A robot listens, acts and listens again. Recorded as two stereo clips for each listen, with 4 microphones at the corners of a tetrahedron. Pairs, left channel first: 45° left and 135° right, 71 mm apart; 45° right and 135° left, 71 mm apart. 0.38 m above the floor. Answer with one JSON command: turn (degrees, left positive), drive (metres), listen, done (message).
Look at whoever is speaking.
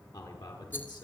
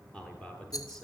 {"turn": 30}
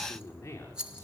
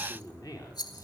{"turn": -10}
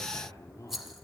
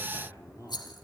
{"done": "Facing the man speaking, over 4 m away."}